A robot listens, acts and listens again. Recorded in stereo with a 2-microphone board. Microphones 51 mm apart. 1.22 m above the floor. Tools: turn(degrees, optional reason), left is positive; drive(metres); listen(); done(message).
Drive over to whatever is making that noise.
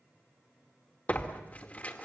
turn(degrees=30, reason="The tearing paper: about 30° left or 150° left.")
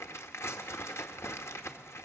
turn(degrees=115, reason="So it is at 115° left.")
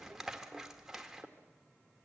turn(degrees=-10, reason="The tearing paper is now 10° right.")
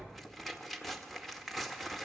drive(metres=1.0)
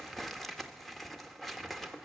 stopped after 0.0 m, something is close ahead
done("Blocked. The tearing paper is further on, straight ahead.")